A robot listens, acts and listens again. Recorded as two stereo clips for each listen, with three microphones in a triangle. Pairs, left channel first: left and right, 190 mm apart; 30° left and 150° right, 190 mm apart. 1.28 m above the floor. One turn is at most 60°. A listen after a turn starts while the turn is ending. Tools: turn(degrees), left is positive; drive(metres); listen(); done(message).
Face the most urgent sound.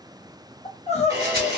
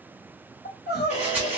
turn(degrees=40)
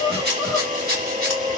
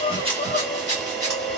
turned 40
done("Found it: crying, straight ahead.")